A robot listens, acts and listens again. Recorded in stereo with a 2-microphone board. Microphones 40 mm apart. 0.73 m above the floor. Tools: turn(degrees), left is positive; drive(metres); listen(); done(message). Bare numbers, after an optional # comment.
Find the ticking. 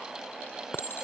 listen()
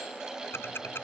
# The ticking: about 70° left or 110° left.
turn(70)
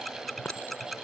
done("Facing the ticking.")